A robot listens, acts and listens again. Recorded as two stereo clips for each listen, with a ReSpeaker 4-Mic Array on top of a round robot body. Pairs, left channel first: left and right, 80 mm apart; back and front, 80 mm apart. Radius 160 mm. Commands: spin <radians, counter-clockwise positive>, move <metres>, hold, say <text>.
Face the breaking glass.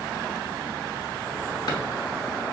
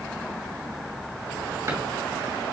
hold
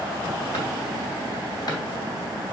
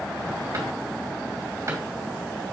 hold
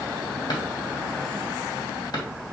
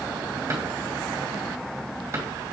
say I can't make out breaking glass to turn to.